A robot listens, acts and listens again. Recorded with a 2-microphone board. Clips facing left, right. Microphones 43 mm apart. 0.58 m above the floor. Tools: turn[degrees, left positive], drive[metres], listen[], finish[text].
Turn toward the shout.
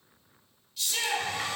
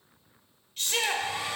Thought: The shout: about 45° right or 135° right.
Action: turn[-45]
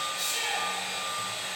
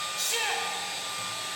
Thought: So it is at 85° right.
Action: turn[-85]
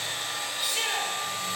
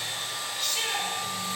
Thought: The shout is now 15° left.
Action: turn[15]
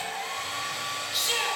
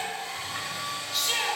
Action: finish[Facing the shout.]